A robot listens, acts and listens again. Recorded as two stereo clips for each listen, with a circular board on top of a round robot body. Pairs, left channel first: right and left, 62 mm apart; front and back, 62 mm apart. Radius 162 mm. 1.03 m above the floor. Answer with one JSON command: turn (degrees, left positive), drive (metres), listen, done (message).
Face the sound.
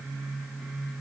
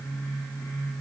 {"listen": true}
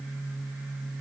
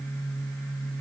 {"listen": true}
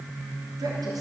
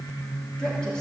{"turn": 75}
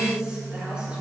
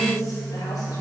{"turn": 15}
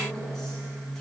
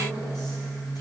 {"listen": true}
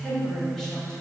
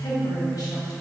{"done": "Found it: a woman speaking, straight ahead, over 4 m away."}